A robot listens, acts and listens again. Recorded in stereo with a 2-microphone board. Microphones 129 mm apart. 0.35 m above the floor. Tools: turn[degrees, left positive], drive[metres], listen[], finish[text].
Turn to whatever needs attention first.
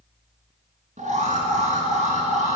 Action: turn[-90]
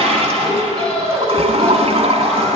Action: finish[Found it: an alarm, straight ahead, 2 to 4 m away.]